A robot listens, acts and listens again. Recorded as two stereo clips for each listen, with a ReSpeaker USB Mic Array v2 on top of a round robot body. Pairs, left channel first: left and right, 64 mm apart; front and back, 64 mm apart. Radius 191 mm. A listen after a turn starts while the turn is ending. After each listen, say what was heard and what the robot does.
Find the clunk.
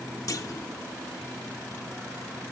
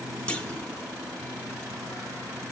The clunk: 70° left. Turn 70° left.
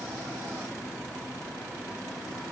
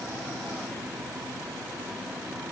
I heard a clunk from this way, but can't make it out now.